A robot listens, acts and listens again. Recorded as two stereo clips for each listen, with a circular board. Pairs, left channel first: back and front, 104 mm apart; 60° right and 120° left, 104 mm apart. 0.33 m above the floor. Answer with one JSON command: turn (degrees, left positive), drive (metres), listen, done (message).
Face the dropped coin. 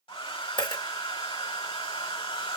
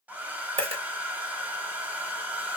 {"turn": 140}
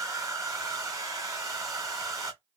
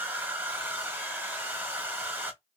{"done": "I heard a dropped coin from this way, but can't make it out now."}